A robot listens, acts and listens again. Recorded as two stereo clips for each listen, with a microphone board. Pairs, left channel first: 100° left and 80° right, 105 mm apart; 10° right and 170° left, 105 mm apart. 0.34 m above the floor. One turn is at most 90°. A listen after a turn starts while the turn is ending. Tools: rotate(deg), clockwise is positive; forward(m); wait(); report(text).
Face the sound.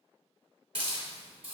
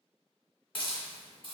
rotate(50)
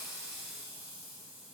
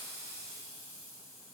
wait()
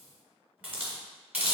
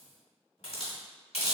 report("Found it: a hiss, straight ahead.")